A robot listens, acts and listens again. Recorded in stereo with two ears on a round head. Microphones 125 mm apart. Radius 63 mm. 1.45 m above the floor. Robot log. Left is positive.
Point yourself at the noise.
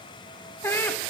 note: The laughter: about 15° left or 165° left.
cmd yaw +15
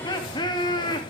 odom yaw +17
note: The laughter: about 30° left or 150° left.
cmd yaw +30
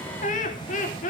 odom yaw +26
note: So it is at 120° left.
cmd yaw +120
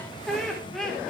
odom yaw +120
end: Found it: laughter, straight ahead, over 4 m away.